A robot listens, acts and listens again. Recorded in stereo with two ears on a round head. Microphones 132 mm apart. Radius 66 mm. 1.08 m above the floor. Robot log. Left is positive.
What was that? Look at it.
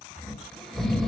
cmd yaw +30
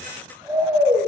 note: So it is at 30° right.
cmd yaw -30
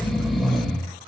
end: Facing the snoring, 1 to 2 m away.